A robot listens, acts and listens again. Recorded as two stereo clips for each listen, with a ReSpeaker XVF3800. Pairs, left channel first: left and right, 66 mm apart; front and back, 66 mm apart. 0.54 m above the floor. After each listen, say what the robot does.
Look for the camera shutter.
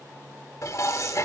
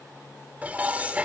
Keep listening.
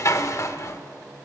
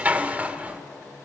Keep listening.
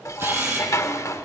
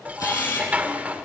Turn 35° right.
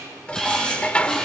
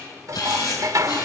Turn 10° left.
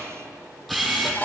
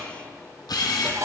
Facing the camera shutter.